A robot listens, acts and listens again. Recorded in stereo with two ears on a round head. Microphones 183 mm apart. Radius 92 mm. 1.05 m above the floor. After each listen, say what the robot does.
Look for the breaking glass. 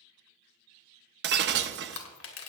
Turn 55° right.
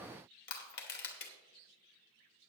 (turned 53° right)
Keep listening.
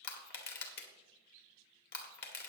I heard breaking glass, but can't make it out now. It was about straight ahead or 70° right.